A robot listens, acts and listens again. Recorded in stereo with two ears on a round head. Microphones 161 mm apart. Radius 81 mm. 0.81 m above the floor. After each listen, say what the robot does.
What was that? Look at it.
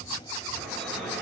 Turn 30° left.
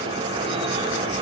Turn 25° right.
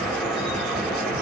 Facing the dripping.